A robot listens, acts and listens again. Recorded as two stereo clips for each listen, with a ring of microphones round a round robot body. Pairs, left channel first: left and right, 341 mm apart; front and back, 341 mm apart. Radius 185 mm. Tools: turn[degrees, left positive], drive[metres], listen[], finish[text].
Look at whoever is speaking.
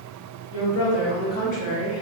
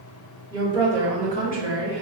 Thought: The woman speaking: 55° left.
Action: turn[55]
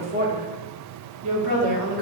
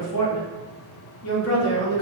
Thought: The woman speaking is now 60° right.
Action: turn[-60]
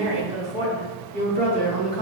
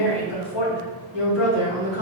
Thought: The woman speaking is now 30° right.
Action: turn[-30]
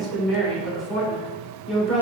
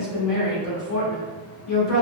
Action: finish[Found it: a woman speaking, straight ahead, 2 to 4 m away.]